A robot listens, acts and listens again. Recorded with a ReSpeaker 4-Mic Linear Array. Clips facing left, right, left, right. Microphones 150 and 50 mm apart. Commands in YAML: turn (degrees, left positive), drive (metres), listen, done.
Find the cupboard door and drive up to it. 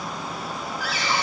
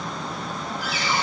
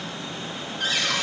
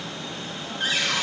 turn: -20
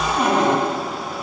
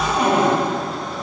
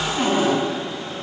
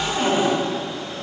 drive: 1.0
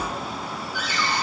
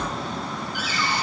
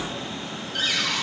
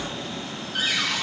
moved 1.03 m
turn: -10
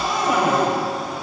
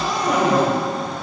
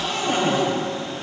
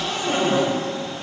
drive: 1.0
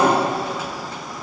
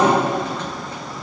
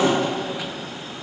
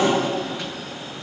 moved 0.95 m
turn: 10
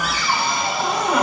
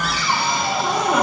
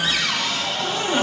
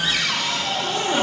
drive: 1.0
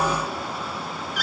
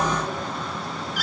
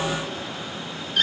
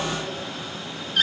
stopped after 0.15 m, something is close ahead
done: "Arrived at the cupboard door, straight ahead."